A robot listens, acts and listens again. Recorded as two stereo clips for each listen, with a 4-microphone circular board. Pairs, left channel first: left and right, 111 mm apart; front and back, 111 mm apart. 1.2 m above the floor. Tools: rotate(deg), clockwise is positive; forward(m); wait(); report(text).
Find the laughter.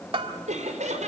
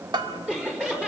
rotate(100)
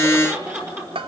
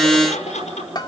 rotate(20)
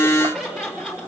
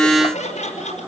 report("Found it: laughter, straight ahead.")